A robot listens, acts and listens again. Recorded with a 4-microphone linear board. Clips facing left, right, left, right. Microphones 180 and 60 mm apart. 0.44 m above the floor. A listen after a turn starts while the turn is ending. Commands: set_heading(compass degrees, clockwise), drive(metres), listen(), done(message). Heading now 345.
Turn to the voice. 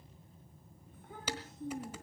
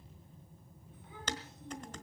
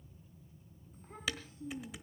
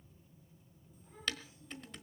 set_heading(300)
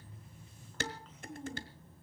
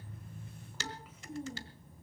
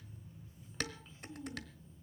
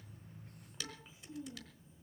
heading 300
set_heading(310)
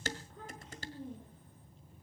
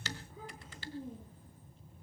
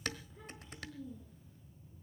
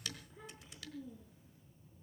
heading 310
set_heading(320)
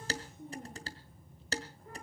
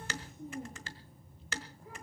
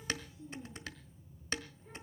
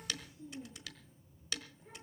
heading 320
done("Found it: a child speaking, straight ahead, over 4 m away.")